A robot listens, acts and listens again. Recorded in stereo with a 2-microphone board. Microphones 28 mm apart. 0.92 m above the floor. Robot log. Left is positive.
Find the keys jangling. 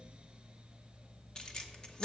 note: The keys jangling: about 30° left or 150° left.
cmd yaw +30
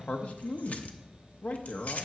note: So it is at 125° left.
cmd yaw +125
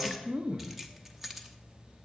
note: The keys jangling is now 10° right.
cmd yaw -10
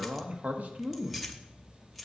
end: Facing the keys jangling.